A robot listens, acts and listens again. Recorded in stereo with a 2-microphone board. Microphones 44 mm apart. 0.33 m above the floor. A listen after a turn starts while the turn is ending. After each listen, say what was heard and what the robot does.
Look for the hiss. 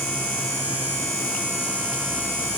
Keep listening.
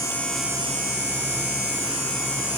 Keep listening.
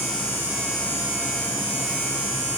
I can't make out a hiss to turn to.